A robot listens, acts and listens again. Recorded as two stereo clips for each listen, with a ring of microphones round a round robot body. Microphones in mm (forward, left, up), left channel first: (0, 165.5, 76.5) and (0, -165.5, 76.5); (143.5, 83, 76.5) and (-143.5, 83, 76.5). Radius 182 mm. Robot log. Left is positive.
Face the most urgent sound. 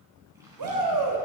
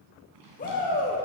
note: The shout: 65° right.
cmd yaw -65
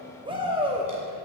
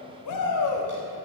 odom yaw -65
note: The shout is now 15° right.
cmd yaw -15
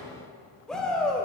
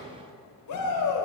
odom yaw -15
end: Found it: a shout, straight ahead.